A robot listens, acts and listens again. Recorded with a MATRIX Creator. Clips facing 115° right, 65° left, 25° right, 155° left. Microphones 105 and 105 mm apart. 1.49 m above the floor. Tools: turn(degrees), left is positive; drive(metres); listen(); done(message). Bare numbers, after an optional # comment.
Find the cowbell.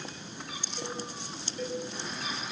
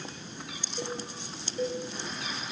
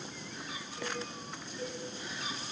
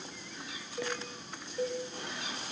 # The cowbell: 125° left.
turn(125)
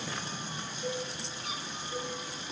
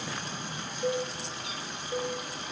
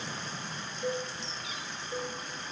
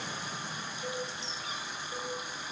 # The cowbell is now 45° left.
turn(45)
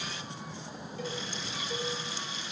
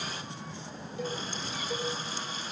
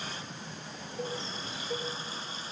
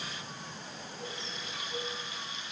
done("Found it: a cowbell, straight ahead, 2 to 4 m away.")